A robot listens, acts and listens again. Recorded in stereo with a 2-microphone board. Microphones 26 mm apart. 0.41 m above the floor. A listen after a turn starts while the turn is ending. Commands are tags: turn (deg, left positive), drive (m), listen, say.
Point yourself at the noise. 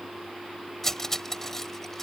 <turn deg="20"/>
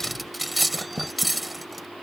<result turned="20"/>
<say>Found it: cutlery clinking, straight ahead.</say>